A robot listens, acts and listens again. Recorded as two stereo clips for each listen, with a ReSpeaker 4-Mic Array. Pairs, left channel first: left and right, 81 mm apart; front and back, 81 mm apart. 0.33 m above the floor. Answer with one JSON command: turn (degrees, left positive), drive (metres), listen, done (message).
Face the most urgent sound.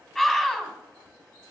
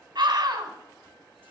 {"turn": 170}
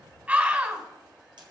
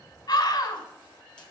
{"turn": -25}
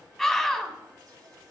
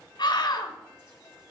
{"done": "Facing the scream."}